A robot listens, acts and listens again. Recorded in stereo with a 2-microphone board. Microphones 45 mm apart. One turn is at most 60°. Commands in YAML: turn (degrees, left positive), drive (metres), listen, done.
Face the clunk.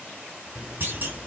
turn: -50
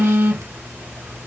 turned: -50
listen: true
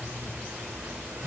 done: "I heard a clunk, but can't make it out now. It was about straight ahead or 80° right."